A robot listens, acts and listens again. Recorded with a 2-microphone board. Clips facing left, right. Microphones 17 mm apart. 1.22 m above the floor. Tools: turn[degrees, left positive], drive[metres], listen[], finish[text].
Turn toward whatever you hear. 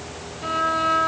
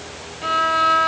Thought: The violin: about 30° right or 150° right.
Action: turn[-30]
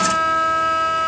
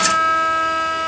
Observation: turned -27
Thought: So it is at 10° right.
Action: turn[-10]
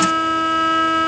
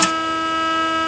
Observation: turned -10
Action: finish[Found it: a violin, straight ahead.]